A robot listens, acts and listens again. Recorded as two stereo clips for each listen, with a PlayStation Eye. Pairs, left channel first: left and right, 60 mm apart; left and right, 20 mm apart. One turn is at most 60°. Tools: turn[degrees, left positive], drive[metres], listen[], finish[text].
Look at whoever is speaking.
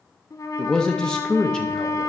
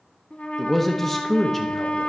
Action: turn[30]
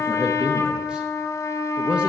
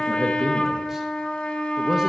Action: listen[]
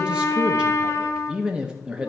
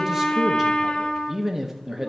Thought: So it is at 20° right.
Action: turn[-20]
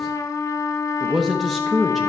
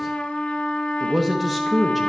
Action: finish[Found it: a man speaking, straight ahead.]